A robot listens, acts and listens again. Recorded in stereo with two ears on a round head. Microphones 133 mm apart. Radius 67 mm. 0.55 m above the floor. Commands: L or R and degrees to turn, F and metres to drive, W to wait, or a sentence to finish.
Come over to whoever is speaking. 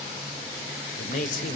L60
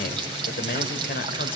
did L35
L75
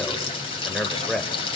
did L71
F1.0
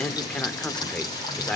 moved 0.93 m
F1.0
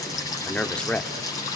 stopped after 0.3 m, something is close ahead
L10
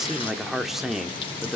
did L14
I am next to the man speaking.